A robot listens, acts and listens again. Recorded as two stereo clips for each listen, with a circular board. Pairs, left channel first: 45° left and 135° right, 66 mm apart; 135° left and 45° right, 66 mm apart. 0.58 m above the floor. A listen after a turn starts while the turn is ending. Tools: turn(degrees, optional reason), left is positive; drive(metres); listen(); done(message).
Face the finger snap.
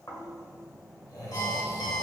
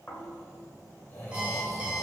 listen()
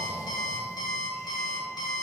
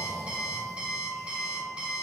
listen()
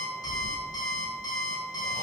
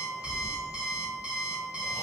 done("I can't make out a finger snap, only snoring and an alarm clock.")